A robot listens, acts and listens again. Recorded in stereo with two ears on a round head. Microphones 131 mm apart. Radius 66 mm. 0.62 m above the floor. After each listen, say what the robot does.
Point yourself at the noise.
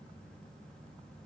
Keep listening.
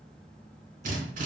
Turn 55° right.
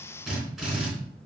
Found it: a drill, straight ahead.